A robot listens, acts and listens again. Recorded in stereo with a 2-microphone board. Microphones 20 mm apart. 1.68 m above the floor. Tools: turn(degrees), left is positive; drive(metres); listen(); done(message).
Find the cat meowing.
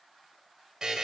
listen()
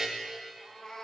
turn(degrees=45)
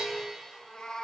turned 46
turn(degrees=90)
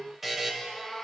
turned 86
done("Facing the cat meowing.")